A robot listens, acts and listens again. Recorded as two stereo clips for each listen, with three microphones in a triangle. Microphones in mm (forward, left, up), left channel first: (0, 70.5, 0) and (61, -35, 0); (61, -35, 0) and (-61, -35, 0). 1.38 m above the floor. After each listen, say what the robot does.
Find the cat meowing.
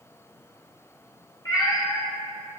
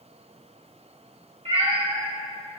Turn 165° left.
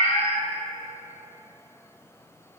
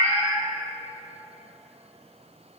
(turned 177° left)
Turn 65° right.
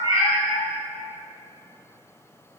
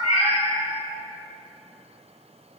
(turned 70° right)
Found it: a cat meowing, straight ahead, 2 to 4 m away.